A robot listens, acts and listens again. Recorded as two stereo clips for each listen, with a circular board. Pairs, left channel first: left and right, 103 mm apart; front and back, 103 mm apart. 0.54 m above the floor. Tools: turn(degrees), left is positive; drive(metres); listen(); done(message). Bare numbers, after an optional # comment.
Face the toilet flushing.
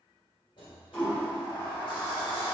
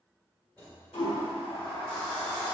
# The toilet flushing: 15° left.
turn(15)
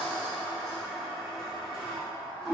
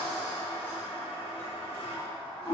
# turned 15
done("Facing the toilet flushing.")